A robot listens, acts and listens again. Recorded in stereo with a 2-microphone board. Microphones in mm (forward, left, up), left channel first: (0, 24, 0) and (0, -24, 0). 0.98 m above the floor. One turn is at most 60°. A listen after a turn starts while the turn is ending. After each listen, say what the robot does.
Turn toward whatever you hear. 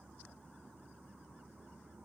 Keep listening.
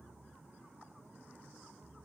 Keep listening.
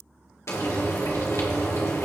Turn 60° left.
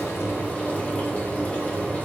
Turn 35° left.
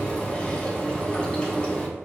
Turn 25° left.
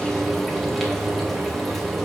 Facing the frying.